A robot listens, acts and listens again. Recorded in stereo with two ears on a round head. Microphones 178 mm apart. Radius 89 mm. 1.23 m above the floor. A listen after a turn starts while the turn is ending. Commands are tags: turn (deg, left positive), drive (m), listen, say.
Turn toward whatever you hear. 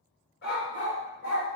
<turn deg="50"/>
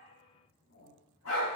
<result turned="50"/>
<turn deg="70"/>
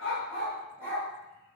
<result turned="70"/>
<turn deg="10"/>
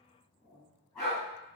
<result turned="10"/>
<say>Facing the dog barking, 2 to 4 m away.</say>